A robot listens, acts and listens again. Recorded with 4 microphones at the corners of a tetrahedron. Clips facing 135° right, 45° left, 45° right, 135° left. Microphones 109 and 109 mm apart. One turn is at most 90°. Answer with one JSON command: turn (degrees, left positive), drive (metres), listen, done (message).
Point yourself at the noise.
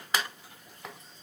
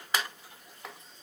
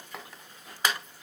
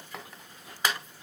{"listen": true}
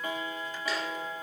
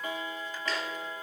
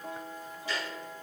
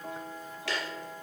{"listen": true}
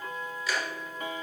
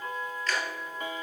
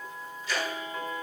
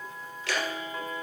{"turn": 90}
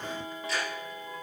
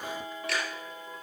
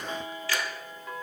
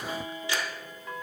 {"turn": 65}
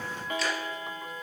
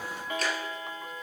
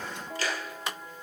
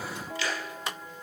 {"done": "Found it: ticking, straight ahead, 2 to 4 m away."}